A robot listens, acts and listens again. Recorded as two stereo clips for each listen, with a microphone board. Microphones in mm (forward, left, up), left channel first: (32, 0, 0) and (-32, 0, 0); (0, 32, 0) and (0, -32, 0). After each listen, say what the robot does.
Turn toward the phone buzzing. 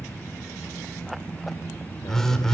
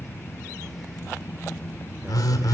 Turn 80° left.
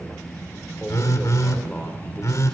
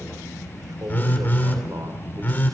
Turn 35° left.
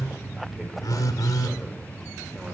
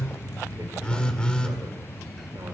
Turn 15° left.
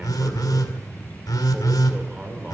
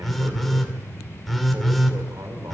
Facing the phone buzzing, 2 to 4 m away.